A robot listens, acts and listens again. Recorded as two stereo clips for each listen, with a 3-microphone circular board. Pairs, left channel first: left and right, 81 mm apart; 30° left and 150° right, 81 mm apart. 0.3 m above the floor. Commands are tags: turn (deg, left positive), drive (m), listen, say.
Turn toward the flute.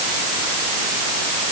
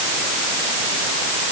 <listen/>
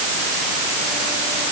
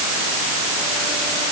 <listen/>
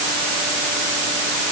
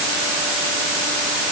<say>I can't make out a flute.</say>